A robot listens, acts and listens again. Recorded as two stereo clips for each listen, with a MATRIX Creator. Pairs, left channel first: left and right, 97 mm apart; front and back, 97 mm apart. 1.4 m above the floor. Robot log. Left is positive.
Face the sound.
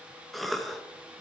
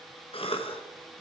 end: Found it: a cough, straight ahead.